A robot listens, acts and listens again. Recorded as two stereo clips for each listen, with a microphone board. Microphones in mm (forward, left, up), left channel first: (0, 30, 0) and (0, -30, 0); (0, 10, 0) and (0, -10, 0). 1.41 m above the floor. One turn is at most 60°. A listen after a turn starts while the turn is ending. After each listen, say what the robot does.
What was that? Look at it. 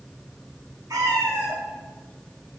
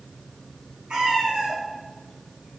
Turn 60° right.
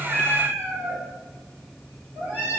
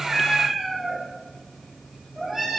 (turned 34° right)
Turn 35° right.
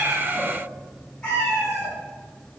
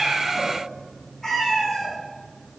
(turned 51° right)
Turn 25° left.
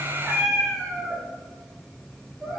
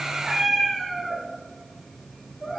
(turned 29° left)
Found it: a cat meowing, straight ahead.